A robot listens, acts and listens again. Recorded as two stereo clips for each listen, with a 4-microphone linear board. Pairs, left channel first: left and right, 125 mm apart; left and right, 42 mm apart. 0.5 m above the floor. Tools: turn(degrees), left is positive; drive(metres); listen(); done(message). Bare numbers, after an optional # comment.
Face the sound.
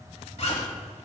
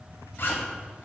# The zipper: about 60° left or 120° left.
turn(60)
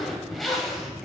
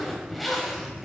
done("Found it: a zipper, straight ahead, 1 to 2 m away.")